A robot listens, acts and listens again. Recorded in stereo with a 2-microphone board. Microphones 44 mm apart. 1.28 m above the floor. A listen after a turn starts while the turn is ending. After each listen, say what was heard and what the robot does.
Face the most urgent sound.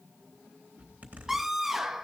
Turn 30° right.
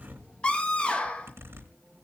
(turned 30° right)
So it is at 25° left. Turn 25° left.
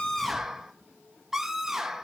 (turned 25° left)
The scream is now 10° right. Turn 10° right.
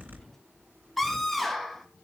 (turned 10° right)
Found it: a scream, straight ahead, 1 to 2 m away.